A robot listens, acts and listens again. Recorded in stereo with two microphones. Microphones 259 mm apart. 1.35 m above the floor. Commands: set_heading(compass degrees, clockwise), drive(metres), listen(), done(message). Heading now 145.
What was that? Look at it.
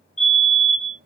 set_heading(85)
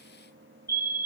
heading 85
set_heading(45)
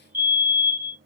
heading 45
set_heading(30)
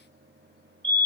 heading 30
done("Found it: a fire alarm, straight ahead.")